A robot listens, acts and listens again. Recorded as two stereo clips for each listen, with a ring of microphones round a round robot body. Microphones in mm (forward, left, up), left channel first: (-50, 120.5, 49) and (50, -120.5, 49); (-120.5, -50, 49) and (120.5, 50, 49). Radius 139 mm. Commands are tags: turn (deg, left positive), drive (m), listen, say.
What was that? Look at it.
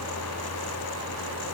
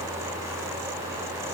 <listen/>
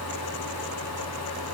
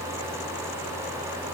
<listen/>
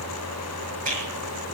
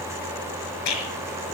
<turn deg="-130"/>
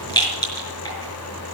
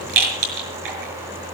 <turn deg="40"/>
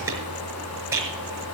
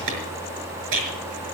<turn deg="15"/>
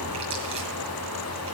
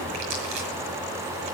<listen/>
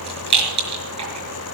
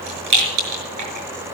<say>Found it: a rattle, straight ahead.</say>